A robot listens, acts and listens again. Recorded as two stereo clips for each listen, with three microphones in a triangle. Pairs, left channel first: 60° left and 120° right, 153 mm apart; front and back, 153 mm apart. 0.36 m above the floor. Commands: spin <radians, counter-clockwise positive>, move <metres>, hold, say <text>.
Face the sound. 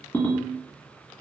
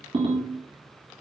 spin 2.27
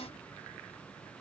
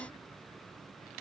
hold
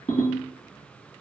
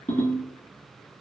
spin 0.35
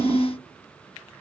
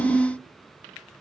say Found it: a ringtone, straight ahead.